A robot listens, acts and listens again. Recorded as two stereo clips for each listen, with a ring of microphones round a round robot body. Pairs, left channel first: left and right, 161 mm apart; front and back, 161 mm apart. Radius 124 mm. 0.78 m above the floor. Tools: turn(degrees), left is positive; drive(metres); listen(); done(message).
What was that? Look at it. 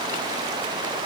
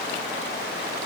listen()
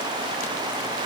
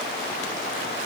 listen()
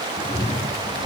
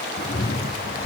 turn(degrees=35)
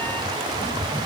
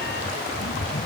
turn(degrees=10)
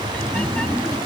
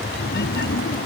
done("Facing the cat meowing.")